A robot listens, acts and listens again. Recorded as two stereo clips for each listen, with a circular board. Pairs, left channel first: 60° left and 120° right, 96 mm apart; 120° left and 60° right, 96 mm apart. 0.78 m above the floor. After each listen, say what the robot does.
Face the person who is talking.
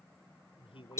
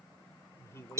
Turn 60° left.
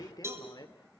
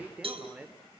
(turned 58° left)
Turn 20° left.
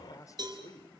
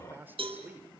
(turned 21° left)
Turn 10° left.
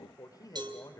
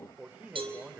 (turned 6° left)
Turn 15° left.
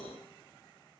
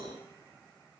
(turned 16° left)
Keep listening.
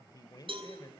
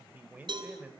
Turn 15° left.
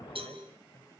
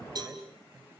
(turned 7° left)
Keep listening.
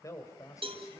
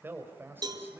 Found it: a man speaking, straight ahead, over 4 m away.